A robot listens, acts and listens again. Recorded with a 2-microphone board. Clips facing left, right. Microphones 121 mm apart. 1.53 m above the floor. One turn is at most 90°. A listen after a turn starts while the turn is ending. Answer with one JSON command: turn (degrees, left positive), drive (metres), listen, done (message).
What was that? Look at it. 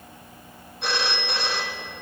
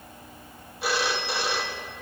{"turn": -30}
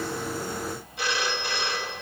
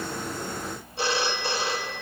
{"turn": -90}
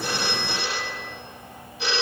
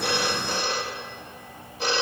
{"turn": -45}
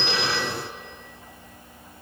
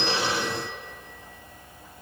{"listen": true}
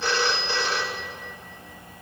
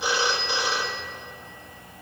{"turn": -15}
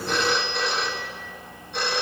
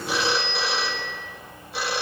{"done": "Facing the phone ringing, 1 to 2 m away."}